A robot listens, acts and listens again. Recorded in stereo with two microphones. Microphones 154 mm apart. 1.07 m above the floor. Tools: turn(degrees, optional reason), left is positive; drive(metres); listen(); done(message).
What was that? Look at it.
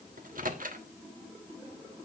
turn(degrees=-70, reason="The microwave: about 70° right or 110° right.")
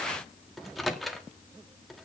done("Facing the microwave.")